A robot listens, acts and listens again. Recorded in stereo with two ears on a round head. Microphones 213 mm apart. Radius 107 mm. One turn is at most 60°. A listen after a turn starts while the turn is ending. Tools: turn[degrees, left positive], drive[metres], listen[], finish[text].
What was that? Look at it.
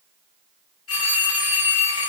Thought: The phone ringing: about 60° left or 120° left.
Action: turn[60]
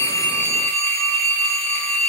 Thought: So it is at 30° left.
Action: turn[30]
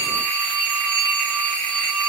Action: finish[Facing the phone ringing.]